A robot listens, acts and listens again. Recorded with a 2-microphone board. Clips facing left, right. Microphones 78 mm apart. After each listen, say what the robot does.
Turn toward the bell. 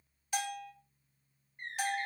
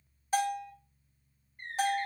Turn 35° right.
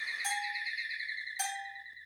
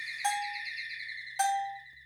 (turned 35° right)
Turn 105° right.
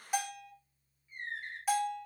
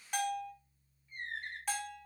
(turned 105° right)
Turn 10° left.
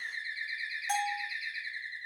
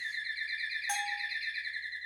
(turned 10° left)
Facing the bell, 1 to 2 m away.